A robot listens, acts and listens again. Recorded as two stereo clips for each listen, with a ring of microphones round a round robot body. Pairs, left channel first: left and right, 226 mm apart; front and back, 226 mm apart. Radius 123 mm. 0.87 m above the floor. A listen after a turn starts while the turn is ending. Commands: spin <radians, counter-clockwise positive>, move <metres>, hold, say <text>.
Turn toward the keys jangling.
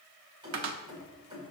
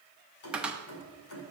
spin -0.35
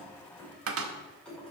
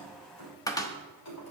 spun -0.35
say Facing the keys jangling.